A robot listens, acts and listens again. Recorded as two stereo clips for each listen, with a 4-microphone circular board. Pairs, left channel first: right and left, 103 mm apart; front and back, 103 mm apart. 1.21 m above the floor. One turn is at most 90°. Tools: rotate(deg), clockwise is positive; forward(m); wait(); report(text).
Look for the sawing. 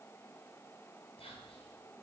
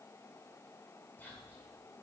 wait()
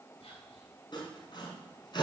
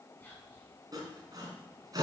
rotate(90)
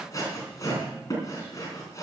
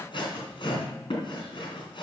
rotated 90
rotate(35)
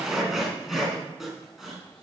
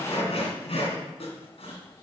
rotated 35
report("Facing the sawing.")